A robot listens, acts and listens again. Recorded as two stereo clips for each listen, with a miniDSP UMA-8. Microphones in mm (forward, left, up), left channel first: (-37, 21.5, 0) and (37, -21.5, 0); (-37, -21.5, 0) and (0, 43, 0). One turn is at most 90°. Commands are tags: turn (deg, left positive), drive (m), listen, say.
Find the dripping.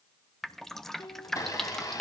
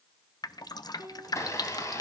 <turn deg="-90"/>
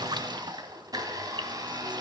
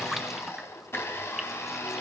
<turn deg="-30"/>
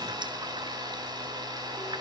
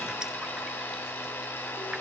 <listen/>
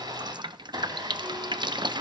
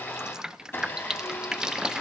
<turn deg="-20"/>
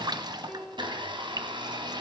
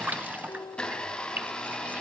<say>Found it: dripping, straight ahead, under 1 m away.</say>